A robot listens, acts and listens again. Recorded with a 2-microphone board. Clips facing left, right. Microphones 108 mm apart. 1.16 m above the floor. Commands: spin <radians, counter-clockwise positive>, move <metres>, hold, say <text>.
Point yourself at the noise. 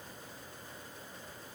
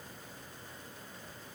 hold
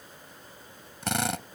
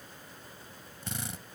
spin 1.57
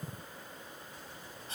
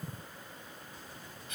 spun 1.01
spin 0.52
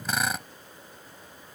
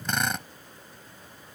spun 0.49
say Facing the drill.